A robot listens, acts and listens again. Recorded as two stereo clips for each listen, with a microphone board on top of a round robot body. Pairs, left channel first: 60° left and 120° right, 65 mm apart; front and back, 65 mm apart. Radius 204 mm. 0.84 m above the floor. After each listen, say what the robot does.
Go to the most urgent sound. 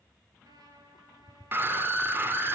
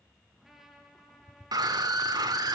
Turn 175° right.
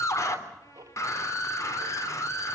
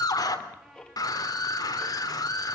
Turn 20° left.
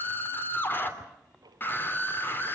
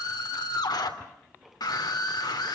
Drive 1.0 m forward.
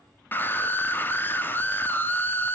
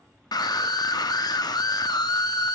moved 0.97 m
Drive 1.0 m forward.
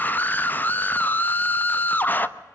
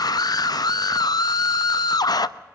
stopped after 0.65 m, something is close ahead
Arrived at the scream, straight ahead.